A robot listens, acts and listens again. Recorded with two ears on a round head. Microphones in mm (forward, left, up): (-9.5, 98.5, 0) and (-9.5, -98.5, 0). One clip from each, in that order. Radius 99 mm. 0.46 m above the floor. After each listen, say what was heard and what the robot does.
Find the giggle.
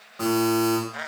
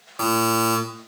Keep listening.
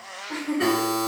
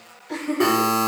Turn 30° left.
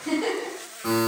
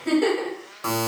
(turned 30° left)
So it is at 25° right. Turn 25° right.
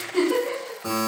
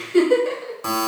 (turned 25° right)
The giggle is now 15° right. Turn 15° right.
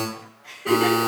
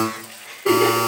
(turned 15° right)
Found it: a giggle, straight ahead.